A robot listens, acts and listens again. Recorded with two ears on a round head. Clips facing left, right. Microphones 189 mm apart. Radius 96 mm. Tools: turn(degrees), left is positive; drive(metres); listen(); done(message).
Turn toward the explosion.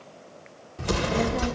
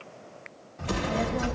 turn(degrees=50)
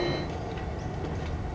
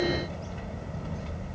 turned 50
listen()
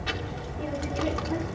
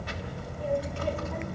done("I heard an explosion, but can't make it out now. It was about straight ahead or 80° left.")